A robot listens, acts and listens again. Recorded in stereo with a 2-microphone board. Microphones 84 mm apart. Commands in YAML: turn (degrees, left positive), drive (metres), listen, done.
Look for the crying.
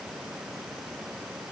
listen: true
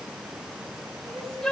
turn: 30
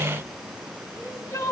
turn: 145
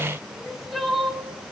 done: "Facing the crying."